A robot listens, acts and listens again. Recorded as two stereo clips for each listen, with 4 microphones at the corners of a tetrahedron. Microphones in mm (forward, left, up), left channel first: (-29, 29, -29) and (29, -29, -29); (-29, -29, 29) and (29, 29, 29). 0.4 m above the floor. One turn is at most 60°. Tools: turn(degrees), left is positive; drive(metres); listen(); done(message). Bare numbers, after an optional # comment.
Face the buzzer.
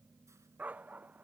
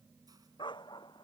listen()
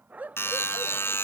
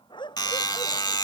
# The buzzer: 165° right.
turn(-60)
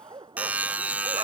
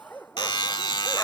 # The buzzer is now 115° right.
turn(-60)
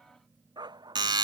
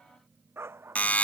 # The buzzer is now 65° right.
turn(-60)
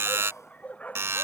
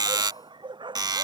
# The buzzer is now 15° left.
turn(15)
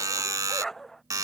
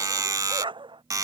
done("Found it: a buzzer, straight ahead.")